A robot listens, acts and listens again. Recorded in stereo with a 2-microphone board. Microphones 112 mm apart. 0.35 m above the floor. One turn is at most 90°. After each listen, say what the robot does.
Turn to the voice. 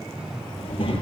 Turn 50° left.
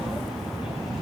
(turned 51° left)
Found it: a child speaking, straight ahead, over 4 m away.